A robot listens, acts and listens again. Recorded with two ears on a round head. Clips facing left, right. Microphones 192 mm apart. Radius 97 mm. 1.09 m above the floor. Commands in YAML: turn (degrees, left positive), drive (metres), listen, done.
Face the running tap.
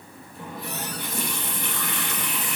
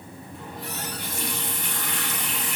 turn: 65
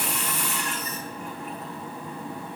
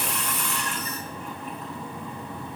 done: "Facing the running tap, 2 to 4 m away."